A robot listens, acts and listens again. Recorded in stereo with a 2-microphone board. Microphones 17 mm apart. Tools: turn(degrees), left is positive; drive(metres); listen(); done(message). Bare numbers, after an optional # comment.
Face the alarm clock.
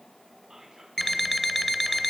turn(30)
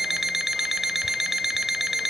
# So it is at 15° right.
turn(-15)
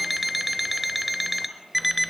done("Found it: an alarm clock, straight ahead, under 1 m away.")